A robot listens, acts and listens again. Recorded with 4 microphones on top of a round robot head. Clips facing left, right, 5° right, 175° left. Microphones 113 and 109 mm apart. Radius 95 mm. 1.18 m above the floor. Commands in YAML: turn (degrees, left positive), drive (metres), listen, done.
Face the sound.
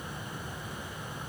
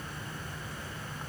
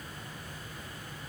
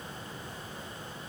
listen: true
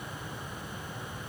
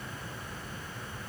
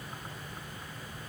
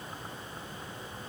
listen: true
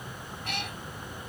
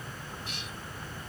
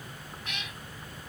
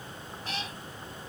turn: 120
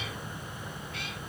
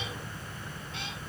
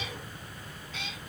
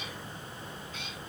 turn: -20
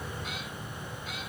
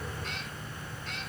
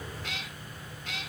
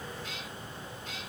done: "Facing the cat meowing."